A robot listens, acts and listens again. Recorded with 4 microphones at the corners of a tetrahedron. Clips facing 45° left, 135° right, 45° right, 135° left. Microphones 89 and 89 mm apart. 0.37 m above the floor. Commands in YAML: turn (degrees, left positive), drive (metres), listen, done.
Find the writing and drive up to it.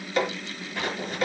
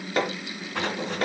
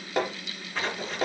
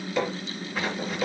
turn: -140
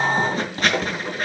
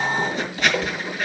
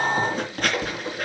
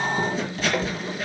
drive: 1.0
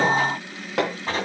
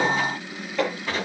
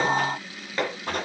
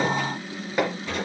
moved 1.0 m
turn: -10
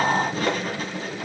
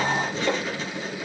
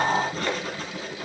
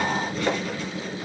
drive: 1.0
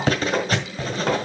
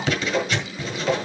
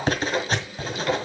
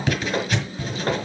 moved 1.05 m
drive: 1.0
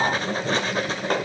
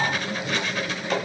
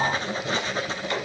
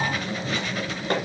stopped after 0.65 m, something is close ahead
done: "Arrived at the writing, straight ahead."